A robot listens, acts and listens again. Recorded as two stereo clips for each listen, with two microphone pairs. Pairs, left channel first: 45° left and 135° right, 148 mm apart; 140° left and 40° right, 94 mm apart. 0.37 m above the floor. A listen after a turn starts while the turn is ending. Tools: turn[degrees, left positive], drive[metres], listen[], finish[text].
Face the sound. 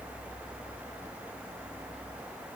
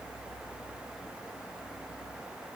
Action: listen[]
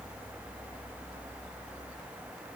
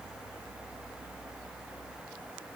Action: listen[]
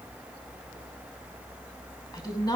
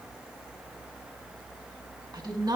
Thought: The woman speaking: 10° right.
Action: turn[-10]
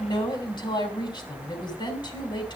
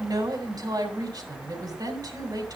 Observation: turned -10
Action: finish[Found it: a woman speaking, straight ahead, 2 to 4 m away.]